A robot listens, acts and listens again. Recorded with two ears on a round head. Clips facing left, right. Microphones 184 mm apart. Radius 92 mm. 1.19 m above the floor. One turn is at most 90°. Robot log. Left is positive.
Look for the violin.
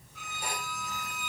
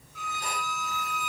note: The violin: about 55° right or 125° right.
cmd yaw -55
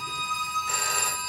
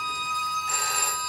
end: Facing the violin, 2 to 4 m away.